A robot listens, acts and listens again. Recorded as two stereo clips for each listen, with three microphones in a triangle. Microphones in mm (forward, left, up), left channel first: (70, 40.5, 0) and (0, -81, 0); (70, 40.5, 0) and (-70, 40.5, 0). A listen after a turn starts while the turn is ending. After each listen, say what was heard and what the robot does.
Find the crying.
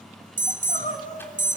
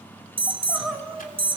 The crying: 85° left. Turn 85° left.
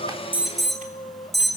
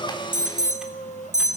Found it: crying, straight ahead, over 4 m away.